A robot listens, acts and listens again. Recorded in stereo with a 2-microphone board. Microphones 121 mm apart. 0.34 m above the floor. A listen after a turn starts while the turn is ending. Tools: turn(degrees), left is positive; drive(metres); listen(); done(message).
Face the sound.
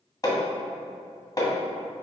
turn(degrees=35)
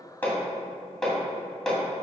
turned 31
done("Found it: hammering, straight ahead, 1 to 2 m away.")